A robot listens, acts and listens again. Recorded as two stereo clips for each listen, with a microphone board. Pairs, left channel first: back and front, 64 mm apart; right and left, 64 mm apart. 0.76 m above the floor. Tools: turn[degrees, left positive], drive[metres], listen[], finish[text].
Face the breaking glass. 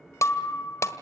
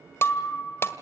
Thought: The breaking glass: 140° right.
Action: turn[-140]
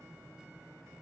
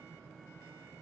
Action: finish[Facing where the breaking glass came from. I can't hear it now.]